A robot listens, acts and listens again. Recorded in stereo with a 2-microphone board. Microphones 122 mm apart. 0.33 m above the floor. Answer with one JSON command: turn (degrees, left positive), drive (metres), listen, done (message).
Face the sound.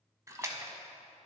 {"turn": -25}
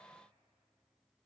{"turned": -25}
{"listen": true}
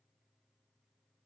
{"done": "I heard a splash, but can't make it out now. It was about straight ahead or 130° right."}